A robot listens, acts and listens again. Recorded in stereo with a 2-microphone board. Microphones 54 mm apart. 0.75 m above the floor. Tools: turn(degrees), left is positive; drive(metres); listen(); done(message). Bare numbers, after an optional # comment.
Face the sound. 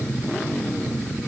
listen()
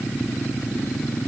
listen()
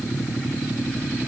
done("I can't make out anything.")